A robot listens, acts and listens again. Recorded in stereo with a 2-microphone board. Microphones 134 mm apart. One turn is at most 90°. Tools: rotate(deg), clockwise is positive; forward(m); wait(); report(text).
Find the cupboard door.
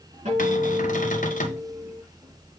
rotate(-90)
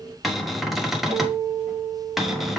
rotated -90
report("Facing the cupboard door, 1 to 2 m away.")